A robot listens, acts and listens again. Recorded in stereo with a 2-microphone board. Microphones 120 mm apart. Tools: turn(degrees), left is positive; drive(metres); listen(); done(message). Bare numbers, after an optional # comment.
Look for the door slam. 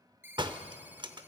# The door slam: about 40° right or 140° right.
turn(-40)
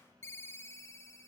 listen()
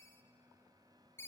done("I heard a door slam, but can't make it out now. It was about straight ahead or 100° right.")